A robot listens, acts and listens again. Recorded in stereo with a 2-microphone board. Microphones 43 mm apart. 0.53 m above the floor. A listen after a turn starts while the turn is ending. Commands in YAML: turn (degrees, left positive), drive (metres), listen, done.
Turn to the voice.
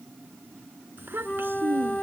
turn: -60
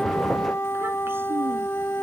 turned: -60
listen: true
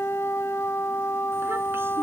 listen: true
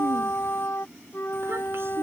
turn: -65
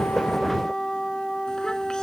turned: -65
listen: true
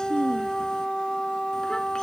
turn: 15
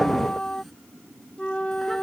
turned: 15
listen: true
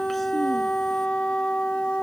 listen: true
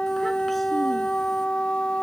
done: "Facing where the child speaking came from. I can't hear it now."